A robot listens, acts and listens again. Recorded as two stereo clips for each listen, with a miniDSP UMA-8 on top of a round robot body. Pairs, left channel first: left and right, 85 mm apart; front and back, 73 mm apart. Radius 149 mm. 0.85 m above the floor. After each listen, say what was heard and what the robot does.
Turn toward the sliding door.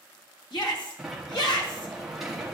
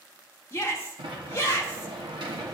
The sliding door: 175° right. Turn 175° right.
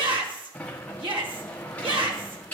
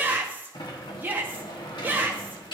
The sliding door is now 15° left. Turn 15° left.
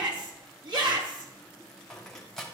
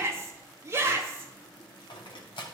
Facing the sliding door.